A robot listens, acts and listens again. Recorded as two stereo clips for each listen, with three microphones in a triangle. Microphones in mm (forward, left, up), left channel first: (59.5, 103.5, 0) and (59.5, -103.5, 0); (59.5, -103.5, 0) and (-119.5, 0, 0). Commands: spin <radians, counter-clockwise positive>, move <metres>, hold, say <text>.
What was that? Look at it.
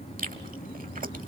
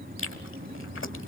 spin -0.70
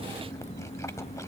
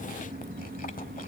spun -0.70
hold
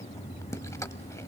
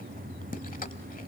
spin 0.26
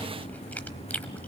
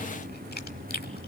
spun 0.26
say Facing the chewing.